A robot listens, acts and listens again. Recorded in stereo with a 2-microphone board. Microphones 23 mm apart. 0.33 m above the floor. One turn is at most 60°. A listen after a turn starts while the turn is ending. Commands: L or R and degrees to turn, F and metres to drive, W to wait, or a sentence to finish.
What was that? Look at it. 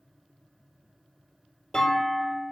L30
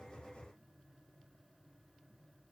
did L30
W
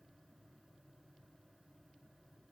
I heard a clunk, but can't make it out now. It was about straight ahead or 120° left.